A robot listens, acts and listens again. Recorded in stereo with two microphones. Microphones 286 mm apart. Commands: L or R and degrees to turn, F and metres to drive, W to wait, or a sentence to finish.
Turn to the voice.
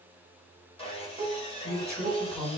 L30
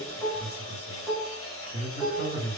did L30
R25
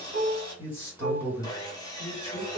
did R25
L10
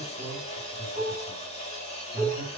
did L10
Found it: a man speaking, straight ahead, 1 to 2 m away.